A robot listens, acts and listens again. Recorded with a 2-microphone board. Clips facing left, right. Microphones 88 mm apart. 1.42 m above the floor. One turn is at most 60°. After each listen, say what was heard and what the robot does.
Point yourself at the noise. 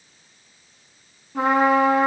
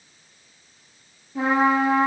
The trumpet: about 65° left or 115° left. Turn 60° left.
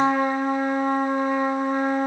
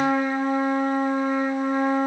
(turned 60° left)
So it is at 50° left. Turn 50° left.
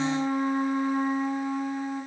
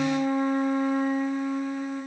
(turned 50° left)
The trumpet is now 10° left. Turn 10° left.
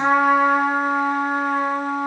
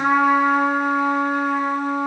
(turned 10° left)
Found it: a trumpet, straight ahead, 1 to 2 m away.